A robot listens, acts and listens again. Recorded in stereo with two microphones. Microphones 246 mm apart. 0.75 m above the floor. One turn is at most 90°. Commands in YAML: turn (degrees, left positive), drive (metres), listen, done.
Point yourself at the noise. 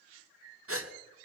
turn: -60
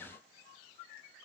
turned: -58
listen: true
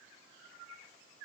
done: "I heard a gasp, but can't make it out now. It was about 5° right or 60° right."